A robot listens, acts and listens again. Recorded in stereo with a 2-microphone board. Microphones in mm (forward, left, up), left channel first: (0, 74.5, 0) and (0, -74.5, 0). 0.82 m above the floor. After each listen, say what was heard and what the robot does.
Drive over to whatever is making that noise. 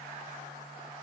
Keep listening.
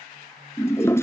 The toilet flushing: about 15° left or 165° left. Turn 15° left.
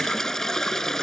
Drive 1.0 m forward.
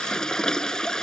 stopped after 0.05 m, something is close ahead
Blocked. The toilet flushing is further on, straight ahead.